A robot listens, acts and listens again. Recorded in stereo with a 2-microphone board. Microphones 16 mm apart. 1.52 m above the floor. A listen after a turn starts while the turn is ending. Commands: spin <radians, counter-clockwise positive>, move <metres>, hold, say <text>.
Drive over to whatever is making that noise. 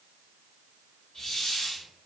spin 0.44
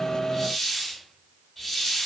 move 1.0
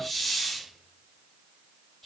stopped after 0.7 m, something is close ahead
say Arrived at the hiss, straight ahead.